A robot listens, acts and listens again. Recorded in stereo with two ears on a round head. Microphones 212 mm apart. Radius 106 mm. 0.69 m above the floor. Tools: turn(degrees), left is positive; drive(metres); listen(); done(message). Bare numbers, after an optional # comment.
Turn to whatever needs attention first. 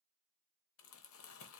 listen()
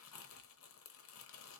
listen()
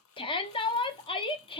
# The shout: about 20° left or 160° left.
turn(20)
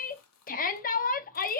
# So it is at 135° left.
turn(135)
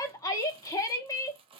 # The shout is now 15° left.
turn(15)
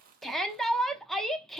done("Found it: a shout, straight ahead, under 1 m away.")